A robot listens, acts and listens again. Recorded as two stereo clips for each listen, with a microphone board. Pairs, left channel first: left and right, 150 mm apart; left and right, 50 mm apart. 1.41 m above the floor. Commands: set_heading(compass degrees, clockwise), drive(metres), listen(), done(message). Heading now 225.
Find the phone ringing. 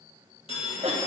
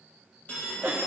set_heading(190)
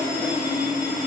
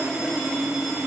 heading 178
listen()
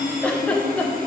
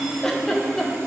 listen()
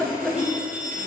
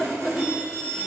set_heading(188)
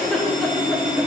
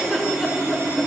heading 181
set_heading(191)
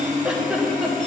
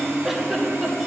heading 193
listen()
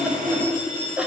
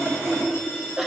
done("Facing the phone ringing.")